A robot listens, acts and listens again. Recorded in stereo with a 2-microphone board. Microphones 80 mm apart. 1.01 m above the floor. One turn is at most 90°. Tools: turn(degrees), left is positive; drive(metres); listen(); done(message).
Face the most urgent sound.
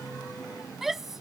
turn(degrees=-30)
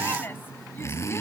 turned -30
listen()
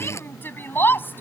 turn(degrees=25)
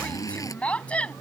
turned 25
turn(degrees=15)
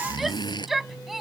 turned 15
done("Found it: a shout, straight ahead.")